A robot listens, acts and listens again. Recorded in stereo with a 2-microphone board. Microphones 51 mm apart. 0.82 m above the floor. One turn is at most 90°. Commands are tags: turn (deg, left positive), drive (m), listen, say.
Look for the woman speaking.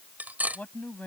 <turn deg="30"/>
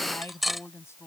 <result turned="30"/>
<turn deg="90"/>
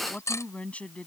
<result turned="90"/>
<turn deg="25"/>
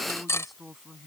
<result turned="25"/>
<say>Facing the woman speaking.</say>